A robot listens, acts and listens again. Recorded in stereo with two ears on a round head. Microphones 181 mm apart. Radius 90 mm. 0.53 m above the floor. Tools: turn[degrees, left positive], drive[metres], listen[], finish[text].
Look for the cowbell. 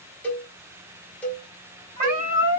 Action: turn[30]
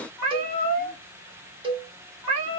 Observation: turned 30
Thought: So it is at 25° right.
Action: turn[-25]
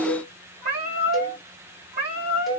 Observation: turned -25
Action: listen[]
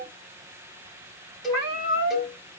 Action: finish[Facing the cowbell.]